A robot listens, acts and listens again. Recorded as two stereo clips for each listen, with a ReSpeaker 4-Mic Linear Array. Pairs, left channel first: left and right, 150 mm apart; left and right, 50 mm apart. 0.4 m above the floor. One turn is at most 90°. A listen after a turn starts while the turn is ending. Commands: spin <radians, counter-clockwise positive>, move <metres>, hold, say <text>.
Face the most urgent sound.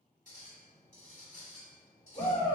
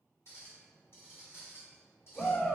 spin 0.44
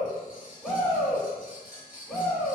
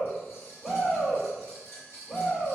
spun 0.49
say Facing the shout, 1 to 2 m away.